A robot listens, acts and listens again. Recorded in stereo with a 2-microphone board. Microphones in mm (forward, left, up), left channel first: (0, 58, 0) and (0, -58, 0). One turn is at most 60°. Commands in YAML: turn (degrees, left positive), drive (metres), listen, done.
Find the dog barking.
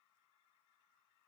listen: true
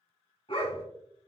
turn: 50
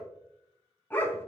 turn: 20
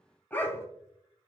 turn: 20
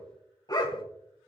turn: 40
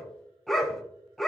done: "Found it: a dog barking, straight ahead."